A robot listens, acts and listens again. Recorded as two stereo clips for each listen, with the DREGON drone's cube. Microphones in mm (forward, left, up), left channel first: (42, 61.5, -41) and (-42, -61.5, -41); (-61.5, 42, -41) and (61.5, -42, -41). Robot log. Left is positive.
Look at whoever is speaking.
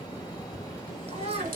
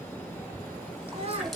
note: The child speaking: 80° right.
cmd yaw -80
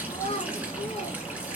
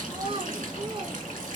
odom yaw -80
note: The child speaking is now 15° left.
cmd yaw +15
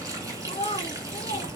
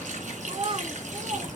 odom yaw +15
note: The child speaking is now 20° left.
cmd yaw +20
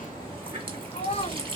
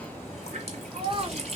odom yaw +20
note: The child speaking is now 15° left.
cmd yaw +15
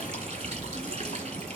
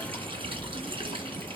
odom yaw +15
cmd idle
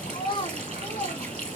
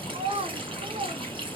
end: Found it: a child speaking, straight ahead.